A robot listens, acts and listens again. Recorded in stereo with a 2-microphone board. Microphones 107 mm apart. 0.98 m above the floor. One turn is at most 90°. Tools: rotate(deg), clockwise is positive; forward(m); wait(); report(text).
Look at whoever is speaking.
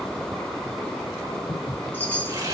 wait()
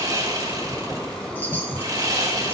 wait()
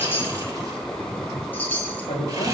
rotate(-90)
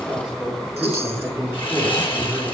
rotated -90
rotate(10)
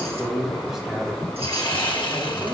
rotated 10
report("Facing the man speaking.")